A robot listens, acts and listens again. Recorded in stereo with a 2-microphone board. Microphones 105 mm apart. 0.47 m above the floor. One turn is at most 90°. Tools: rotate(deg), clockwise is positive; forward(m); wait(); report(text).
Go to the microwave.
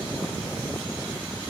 wait()
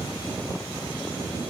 wait()
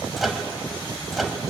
rotate(-30)
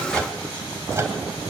wait()
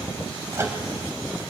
rotate(30)
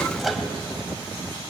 forward(1.0)
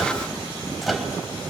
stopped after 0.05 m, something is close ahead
report("Blocked. The microwave is further on, straight ahead.")